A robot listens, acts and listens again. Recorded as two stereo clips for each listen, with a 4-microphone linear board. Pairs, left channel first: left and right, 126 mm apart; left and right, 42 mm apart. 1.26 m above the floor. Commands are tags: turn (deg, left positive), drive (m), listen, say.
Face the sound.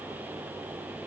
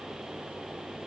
<listen/>
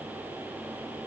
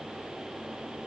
<listen/>
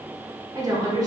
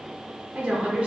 <turn deg="-30"/>
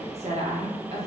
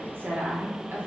<turn deg="-120"/>
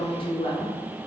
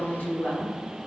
<turn deg="45"/>
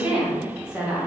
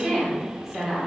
<turn deg="-10"/>
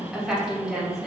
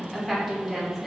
<say>Facing the woman speaking, under 1 m away.</say>